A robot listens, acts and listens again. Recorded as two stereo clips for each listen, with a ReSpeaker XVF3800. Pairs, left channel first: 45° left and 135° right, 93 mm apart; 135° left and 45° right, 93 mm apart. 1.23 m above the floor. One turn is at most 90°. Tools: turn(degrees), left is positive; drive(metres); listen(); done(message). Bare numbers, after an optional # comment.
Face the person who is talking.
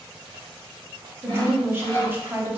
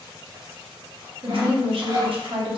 # The woman speaking: 65° right.
turn(-65)
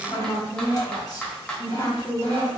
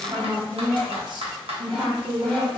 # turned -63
done("Facing the woman speaking.")